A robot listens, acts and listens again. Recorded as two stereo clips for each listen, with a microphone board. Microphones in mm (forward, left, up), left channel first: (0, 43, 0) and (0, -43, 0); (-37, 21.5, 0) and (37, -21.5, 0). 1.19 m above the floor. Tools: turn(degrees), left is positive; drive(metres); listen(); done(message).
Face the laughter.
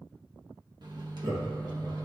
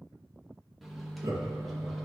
turn(degrees=-80)
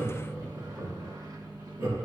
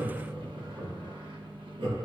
turn(degrees=-35)
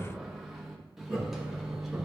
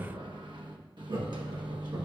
done("Found it: laughter, straight ahead, 2 to 4 m away.")